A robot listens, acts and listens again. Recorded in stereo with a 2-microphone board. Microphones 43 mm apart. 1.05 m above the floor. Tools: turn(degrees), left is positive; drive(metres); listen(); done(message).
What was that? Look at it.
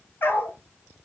turn(degrees=55)
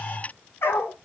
turn(degrees=70)
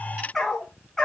turn(degrees=10)
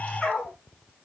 done("Found it: a dog barking, straight ahead, over 4 m away.")